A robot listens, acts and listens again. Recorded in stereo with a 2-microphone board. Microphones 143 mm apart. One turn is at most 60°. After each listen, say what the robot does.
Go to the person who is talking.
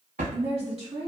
Turn 45° right.
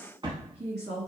Turn 60° right.
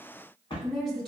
Drive 1.0 m forward.
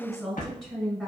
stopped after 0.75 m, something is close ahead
Arrived at the woman speaking, straight ahead.